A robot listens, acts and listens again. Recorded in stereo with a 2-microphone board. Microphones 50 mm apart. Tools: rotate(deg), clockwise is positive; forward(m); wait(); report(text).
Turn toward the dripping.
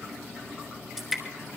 rotate(-30)
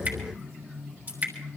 rotate(30)
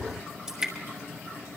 rotate(10)
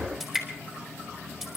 report("Found it: dripping, straight ahead, 2 to 4 m away.")